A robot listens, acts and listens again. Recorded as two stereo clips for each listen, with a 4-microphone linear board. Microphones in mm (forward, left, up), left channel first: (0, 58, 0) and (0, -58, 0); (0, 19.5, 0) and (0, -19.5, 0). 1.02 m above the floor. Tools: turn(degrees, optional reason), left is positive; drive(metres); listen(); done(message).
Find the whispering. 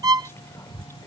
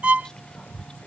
turn(degrees=20, reason="The whispering: about 20° left or 160° left.")
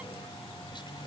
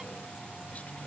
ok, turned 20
listen()
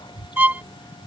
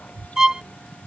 turn(degrees=135, reason="So it is at 135° left.")
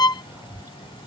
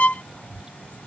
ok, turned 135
turn(degrees=-20, reason="The whispering is now 20° right.")
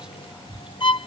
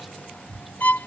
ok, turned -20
done("Found it: whispering, straight ahead.")